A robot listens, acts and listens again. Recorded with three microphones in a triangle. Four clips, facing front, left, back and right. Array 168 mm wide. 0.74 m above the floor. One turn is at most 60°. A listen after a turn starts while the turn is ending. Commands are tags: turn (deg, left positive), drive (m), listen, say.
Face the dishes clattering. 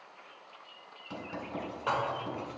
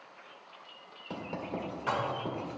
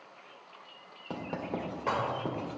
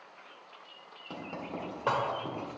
<turn deg="-60"/>
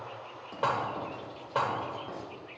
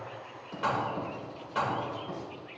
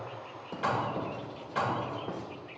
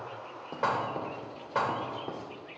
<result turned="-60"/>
<turn deg="-35"/>
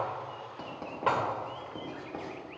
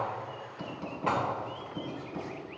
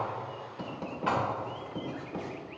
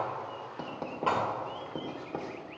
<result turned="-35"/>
<say>Found it: dishes clattering, straight ahead.</say>